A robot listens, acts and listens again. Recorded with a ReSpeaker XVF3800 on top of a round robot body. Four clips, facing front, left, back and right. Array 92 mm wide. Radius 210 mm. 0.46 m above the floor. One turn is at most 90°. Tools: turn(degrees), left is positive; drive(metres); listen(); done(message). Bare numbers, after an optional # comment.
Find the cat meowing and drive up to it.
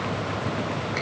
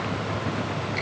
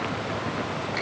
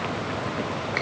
listen()
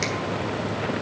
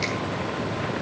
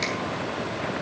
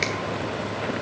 listen()
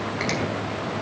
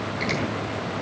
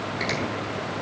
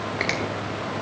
done("I can't make out a cat meowing to turn to.")